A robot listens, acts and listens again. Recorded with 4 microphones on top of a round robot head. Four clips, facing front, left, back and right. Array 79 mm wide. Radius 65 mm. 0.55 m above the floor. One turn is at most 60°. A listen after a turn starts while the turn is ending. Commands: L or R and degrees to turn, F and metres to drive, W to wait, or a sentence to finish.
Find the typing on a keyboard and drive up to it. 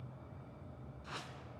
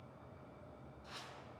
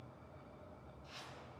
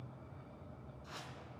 W
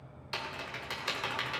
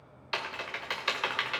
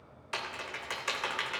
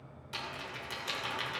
L60
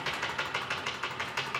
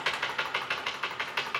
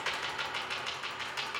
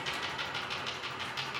L60
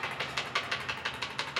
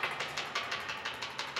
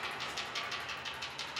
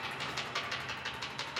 F1.0
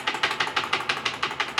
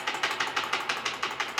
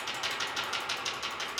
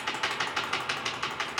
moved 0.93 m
L10
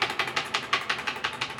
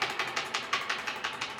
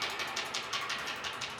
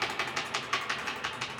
F1.0
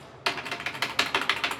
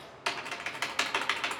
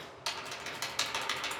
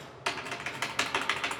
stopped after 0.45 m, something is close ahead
Arrived at the typing on a keyboard, straight ahead.